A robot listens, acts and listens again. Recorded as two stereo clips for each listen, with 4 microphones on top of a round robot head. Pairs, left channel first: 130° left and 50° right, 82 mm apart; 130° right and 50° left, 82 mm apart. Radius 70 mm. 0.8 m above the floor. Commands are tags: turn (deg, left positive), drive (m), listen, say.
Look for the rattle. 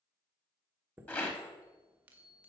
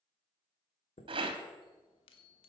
<turn deg="60"/>
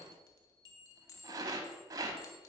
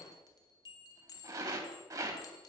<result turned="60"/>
<say>Facing the rattle.</say>